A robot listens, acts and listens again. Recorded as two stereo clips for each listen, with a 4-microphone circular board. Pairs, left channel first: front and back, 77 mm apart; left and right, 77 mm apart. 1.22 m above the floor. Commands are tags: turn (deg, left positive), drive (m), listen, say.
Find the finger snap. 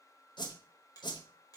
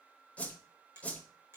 <turn deg="-35"/>
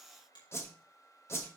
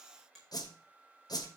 <say>Facing the finger snap.</say>